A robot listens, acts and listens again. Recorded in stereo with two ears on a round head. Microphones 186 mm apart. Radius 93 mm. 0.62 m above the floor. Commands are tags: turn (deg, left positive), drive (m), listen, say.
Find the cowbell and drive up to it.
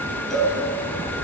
<turn deg="30"/>
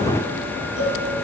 <turn deg="145"/>
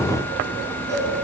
<turn deg="-15"/>
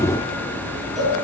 <drive m="1.0"/>
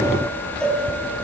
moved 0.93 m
<drive m="1.0"/>
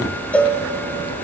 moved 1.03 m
<drive m="1.0"/>
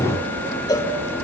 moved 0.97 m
<turn deg="20"/>
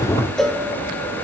<drive m="1.0"/>
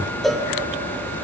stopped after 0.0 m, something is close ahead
<say>I am next to the cowbell.</say>